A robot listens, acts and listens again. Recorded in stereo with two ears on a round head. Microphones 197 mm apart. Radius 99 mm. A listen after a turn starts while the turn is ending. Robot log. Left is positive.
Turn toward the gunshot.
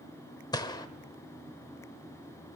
note: The gunshot: about 20° left or 160° left.
cmd yaw +20
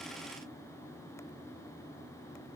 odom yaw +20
cmd idle
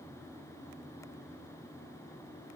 end: I heard a gunshot, but can't make it out now. It was about straight ahead or 140° left.